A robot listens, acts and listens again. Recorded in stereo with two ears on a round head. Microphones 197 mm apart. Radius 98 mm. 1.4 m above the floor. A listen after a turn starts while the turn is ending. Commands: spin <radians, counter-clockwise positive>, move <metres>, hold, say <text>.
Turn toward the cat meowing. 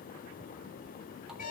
hold
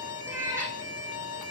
spin -0.52
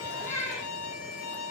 spin 0.17
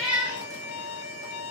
say Facing the cat meowing.